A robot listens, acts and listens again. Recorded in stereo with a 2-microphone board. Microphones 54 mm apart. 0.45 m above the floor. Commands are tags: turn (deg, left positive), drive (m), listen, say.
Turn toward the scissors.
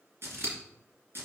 <turn deg="-55"/>
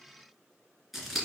<say>Found it: scissors, straight ahead, 2 to 4 m away.</say>